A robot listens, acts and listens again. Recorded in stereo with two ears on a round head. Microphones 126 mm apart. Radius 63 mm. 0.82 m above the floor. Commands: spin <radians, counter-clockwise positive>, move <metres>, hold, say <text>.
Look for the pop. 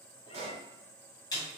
spin -0.87
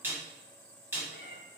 hold
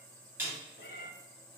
say I heard a pop, but can't make it out now. It was about straight ahead or 80° right.